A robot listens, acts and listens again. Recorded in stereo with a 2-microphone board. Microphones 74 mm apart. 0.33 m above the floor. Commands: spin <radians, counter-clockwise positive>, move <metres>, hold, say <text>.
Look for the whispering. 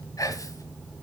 spin 0.87
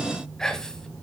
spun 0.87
spin 0.17
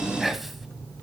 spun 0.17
say Facing the whispering, 1 to 2 m away.